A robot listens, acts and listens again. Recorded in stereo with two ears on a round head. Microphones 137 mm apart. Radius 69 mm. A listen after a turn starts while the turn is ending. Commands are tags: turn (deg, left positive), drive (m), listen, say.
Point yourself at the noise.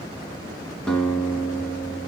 <turn deg="30"/>
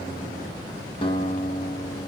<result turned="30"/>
<turn deg="145"/>
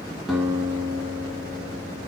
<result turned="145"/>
<turn deg="-20"/>
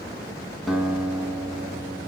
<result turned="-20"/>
<say>Facing the guitar, 1 to 2 m away.</say>